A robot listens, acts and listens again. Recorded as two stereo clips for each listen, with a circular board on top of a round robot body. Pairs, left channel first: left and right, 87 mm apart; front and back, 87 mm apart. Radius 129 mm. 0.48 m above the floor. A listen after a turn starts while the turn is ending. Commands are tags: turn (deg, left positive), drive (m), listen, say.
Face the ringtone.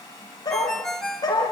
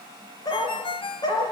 <say>Facing the ringtone, 2 to 4 m away.</say>